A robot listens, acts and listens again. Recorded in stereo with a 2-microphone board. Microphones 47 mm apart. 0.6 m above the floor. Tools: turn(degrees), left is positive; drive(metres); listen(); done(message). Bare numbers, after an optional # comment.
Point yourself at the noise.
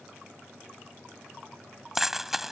turn(-30)
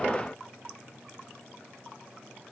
listen()
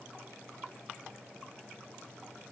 done("I heard a dropped coin, but can't make it out now. It was about 25° left or 145° right.")